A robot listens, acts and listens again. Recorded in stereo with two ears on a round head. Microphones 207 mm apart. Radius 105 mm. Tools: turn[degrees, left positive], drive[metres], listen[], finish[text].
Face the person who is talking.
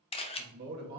Thought: The man speaking: about 45° right or 135° right.
Action: turn[-45]
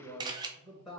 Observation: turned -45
Action: finish[Found it: a man speaking, straight ahead, 1 to 2 m away.]